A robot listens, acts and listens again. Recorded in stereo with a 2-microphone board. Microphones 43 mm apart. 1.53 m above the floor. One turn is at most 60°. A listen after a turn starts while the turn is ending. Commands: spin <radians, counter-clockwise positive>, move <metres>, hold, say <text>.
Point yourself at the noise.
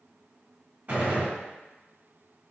spin -0.70
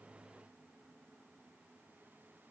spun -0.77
hold
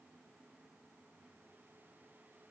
say I heard a gunshot, but can't make it out now. It was about 5° left or 95° right.